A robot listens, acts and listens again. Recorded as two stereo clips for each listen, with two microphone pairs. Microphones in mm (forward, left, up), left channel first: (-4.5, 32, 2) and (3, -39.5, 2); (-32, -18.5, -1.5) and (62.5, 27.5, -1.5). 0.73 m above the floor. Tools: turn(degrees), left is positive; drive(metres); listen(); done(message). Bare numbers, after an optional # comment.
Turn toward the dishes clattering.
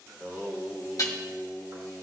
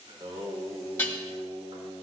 # The dishes clattering: 135° left.
turn(135)
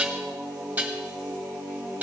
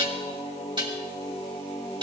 # The dishes clattering is now 15° right.
turn(-15)
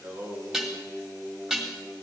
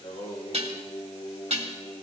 done("Facing the dishes clattering.")